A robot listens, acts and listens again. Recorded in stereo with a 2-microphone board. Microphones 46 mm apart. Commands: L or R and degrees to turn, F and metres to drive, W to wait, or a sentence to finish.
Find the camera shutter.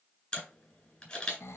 L25
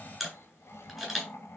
Facing the camera shutter, 2 to 4 m away.